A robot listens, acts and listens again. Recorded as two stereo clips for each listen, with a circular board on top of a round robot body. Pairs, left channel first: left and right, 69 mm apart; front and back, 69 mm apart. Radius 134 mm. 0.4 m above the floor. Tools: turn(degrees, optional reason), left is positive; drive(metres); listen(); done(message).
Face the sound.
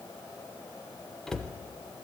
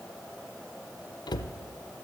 done("Facing the cupboard door.")